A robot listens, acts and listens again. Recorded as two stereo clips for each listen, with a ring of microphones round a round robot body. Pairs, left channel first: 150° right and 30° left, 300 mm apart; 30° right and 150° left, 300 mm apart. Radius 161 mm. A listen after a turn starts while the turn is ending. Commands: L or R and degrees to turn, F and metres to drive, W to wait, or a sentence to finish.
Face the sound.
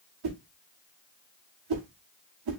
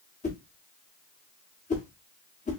L35
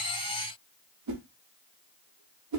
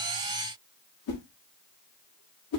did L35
Facing the whoosh, 1 to 2 m away.